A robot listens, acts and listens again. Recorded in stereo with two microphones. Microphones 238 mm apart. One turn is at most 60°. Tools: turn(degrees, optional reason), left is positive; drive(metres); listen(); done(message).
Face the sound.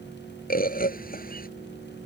turn(degrees=40, reason="The bird: about 40° left or 140° left.")
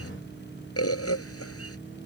turn(degrees=60, reason="So it is at 105° left.")
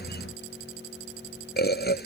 turn(degrees=45, reason="The bird is now 45° left.")
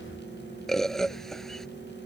done("Facing the bird.")